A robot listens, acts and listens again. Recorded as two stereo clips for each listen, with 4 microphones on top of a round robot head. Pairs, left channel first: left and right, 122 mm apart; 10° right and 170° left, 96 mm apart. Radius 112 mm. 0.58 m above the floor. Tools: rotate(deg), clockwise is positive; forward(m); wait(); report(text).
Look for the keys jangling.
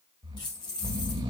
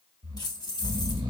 rotate(-35)
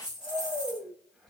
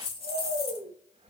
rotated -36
rotate(10)
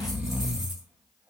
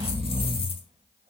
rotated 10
wait()
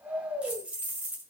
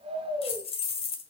rotate(15)
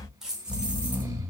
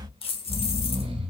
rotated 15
report("Found it: keys jangling, straight ahead.")